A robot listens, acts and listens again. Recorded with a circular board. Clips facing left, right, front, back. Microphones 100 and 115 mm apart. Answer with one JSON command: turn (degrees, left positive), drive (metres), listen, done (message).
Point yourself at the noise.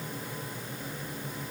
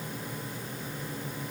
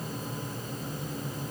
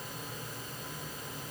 {"listen": true}
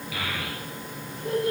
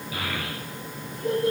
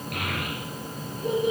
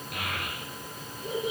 {"turn": -30}
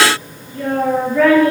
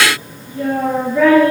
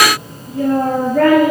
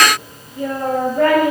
{"done": "Found it: a child speaking, straight ahead."}